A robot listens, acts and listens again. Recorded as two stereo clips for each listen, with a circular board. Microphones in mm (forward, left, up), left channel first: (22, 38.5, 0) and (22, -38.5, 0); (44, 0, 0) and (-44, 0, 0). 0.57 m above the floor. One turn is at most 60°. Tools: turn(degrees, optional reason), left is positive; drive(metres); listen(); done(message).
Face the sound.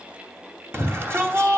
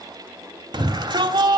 turn(degrees=-60, reason="The shout: 145° right.")
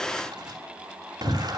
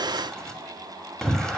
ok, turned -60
turn(degrees=-60, reason="The shout is now 85° right.")
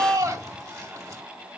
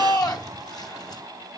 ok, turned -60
turn(degrees=-40, reason="The shout is now 40° right.")
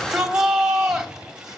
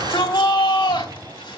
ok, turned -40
turn(degrees=-10, reason="The shout is now 10° right.")
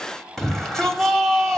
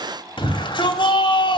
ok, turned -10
done("Facing the shout, 2 to 4 m away.")